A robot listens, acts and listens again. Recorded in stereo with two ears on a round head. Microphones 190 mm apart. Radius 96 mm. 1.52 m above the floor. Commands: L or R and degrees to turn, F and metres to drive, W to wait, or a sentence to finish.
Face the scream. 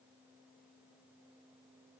W
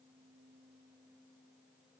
W
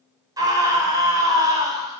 R20
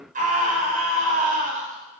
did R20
R140
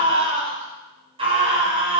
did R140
R25
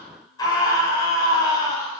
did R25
L15
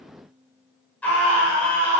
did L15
Facing the scream, over 4 m away.